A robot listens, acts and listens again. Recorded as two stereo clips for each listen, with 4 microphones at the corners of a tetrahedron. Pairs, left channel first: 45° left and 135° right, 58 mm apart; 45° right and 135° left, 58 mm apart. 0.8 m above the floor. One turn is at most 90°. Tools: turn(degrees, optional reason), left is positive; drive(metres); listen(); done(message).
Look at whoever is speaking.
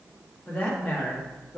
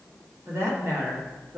turn(degrees=90, reason="The woman speaking: 110° left.")
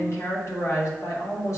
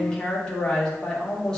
turn(degrees=25, reason="The woman speaking is now 25° left.")
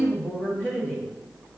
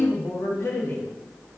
done("Found it: a woman speaking, straight ahead, 1 to 2 m away.")